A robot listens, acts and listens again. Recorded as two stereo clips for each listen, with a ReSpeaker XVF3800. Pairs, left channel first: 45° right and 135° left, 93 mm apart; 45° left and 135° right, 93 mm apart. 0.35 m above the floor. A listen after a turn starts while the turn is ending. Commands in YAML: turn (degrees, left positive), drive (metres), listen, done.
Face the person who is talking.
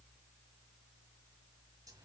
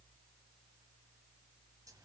listen: true
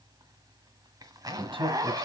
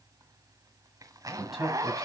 turn: 140
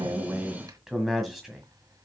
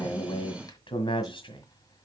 turn: 50
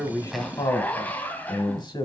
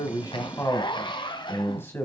turn: -15
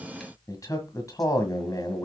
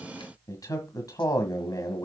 done: "Facing the man speaking, 1 to 2 m away."